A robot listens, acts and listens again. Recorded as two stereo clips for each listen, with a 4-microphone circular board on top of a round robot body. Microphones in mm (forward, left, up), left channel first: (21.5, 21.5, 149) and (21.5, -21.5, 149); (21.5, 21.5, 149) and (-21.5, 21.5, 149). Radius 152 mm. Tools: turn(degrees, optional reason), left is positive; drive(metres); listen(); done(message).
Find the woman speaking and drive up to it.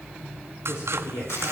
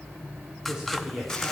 turn(degrees=105, reason="The woman speaking: 105° left.")
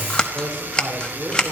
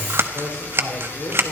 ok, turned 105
turn(degrees=-10, reason="The woman speaking is now 10° right.")
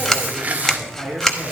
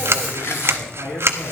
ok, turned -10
drive(metres=1.0)
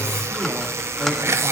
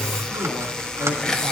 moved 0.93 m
listen()
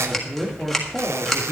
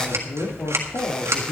drive(metres=1.0)
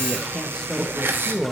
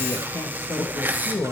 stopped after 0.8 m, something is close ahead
done("I am next to the woman speaking.")